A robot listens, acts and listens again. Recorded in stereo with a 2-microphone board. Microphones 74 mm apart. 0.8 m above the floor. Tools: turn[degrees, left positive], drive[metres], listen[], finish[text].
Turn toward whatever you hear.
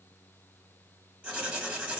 Thought: The writing: about 15° right or 165° right.
Action: turn[-15]
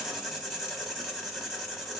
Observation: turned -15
Action: finish[Facing the writing, 1 to 2 m away.]